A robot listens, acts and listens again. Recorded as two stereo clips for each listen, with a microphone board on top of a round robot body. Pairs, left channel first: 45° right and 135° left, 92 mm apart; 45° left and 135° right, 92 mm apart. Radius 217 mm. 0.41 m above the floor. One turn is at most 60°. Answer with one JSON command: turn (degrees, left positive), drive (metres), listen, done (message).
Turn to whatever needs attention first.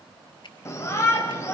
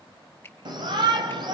{"turn": -60}
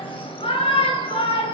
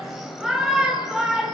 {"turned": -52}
{"turn": -50}
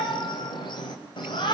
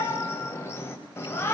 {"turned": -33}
{"turn": -15}
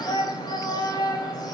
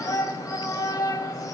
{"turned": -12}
{"done": "Found it: a shout, straight ahead, 2 to 4 m away."}